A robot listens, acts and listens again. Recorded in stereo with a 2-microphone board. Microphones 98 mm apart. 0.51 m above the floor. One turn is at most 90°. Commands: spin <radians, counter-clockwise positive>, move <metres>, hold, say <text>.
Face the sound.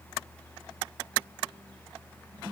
hold
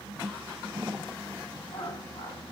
spin 1.31
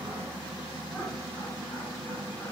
hold
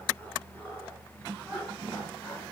spin 0.35
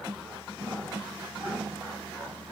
say Found it: laughter, straight ahead.